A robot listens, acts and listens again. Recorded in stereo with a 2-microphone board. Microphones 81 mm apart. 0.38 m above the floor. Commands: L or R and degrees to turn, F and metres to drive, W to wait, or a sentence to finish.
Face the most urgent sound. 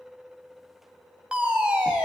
R30
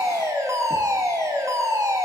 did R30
R135
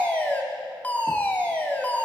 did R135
L20
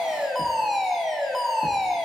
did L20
Facing the fire alarm.